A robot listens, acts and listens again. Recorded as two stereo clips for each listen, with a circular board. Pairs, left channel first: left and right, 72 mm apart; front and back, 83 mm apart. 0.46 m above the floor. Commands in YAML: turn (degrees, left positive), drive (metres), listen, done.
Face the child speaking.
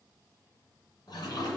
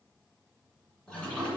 listen: true
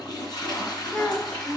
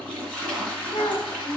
turn: 20
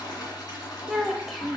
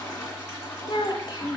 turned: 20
done: "Facing the child speaking."